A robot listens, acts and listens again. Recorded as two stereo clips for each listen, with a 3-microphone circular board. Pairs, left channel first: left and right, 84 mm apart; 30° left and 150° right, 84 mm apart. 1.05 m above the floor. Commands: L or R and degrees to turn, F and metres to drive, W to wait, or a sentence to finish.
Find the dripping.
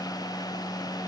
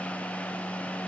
W
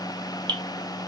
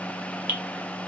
R85
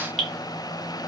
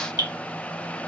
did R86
Facing the dripping, 1 to 2 m away.